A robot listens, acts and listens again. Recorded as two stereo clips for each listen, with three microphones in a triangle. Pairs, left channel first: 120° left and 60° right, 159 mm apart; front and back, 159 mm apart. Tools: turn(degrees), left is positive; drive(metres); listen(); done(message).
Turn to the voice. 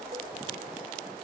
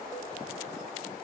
listen()
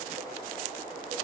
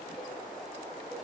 listen()
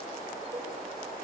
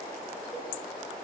done("I can't make out anyone speaking to turn to.")